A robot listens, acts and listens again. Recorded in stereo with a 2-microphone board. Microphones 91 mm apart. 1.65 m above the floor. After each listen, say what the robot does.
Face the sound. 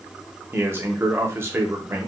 Turn 25° right.
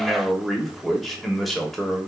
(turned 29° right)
Facing the man speaking.